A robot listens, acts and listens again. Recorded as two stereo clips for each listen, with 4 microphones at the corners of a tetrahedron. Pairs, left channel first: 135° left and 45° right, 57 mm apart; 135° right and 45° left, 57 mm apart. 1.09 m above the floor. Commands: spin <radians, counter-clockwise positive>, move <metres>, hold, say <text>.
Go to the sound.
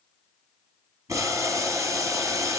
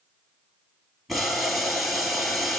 spin -0.79
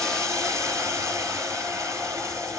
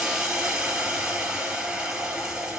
spin -0.52
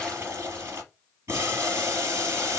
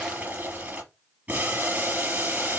spin -0.26
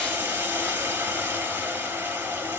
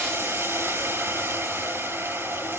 move 1.0
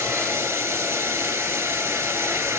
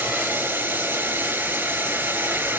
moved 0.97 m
move 1.0
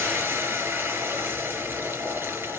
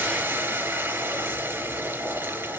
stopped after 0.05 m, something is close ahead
say Blocked. The boiling is further on, straight ahead.